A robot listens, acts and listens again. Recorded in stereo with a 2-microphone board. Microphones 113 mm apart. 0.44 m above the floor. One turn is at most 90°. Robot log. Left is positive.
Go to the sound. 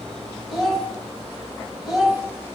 cmd yaw +30
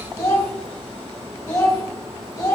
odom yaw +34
note: So it is at 150° left.
cmd yaw +90
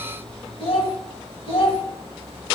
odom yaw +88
note: The child speaking is now 60° left.
cmd yaw +60
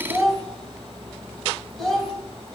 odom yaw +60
cmd fwd 1.0
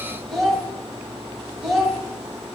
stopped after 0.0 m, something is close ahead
end: Something is in my way. I am facing the child speaking but have not reached it.